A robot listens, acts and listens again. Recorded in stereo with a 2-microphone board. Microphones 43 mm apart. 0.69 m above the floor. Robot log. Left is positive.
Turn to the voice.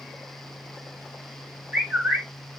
cmd idle
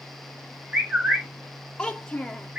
note: The child speaking: about 20° left or 160° left.
cmd yaw +20
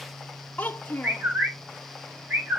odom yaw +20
note: So it is at 135° left.
cmd yaw +135
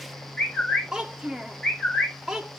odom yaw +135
note: The child speaking is now 15° right.
cmd yaw -15
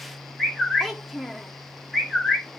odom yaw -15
end: Found it: a child speaking, straight ahead.